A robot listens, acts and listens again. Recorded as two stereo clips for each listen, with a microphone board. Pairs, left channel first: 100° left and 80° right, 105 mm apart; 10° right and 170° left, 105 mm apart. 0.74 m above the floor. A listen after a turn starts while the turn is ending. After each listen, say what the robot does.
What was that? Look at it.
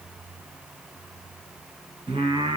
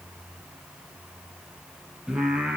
Turn 110° right.
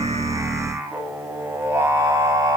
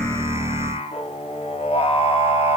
Turn 20° right.
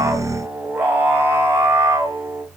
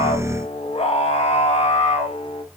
Turn 15° right.
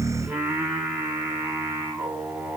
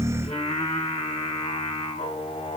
Facing the singing, 2 to 4 m away.